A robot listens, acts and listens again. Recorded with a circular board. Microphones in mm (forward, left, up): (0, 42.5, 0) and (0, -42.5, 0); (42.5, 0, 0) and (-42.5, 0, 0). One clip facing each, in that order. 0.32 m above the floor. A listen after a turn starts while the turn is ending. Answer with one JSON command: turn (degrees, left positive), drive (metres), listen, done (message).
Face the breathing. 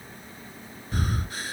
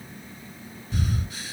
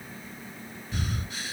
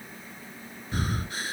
{"turn": 130}
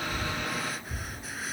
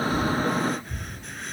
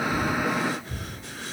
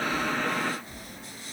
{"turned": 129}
{"done": "Found it: breathing, straight ahead."}